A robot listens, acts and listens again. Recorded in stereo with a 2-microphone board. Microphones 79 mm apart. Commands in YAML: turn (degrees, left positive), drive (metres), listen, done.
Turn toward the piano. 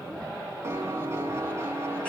turn: -30
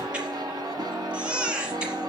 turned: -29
turn: -115
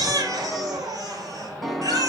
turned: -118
done: "Found it: a piano, straight ahead."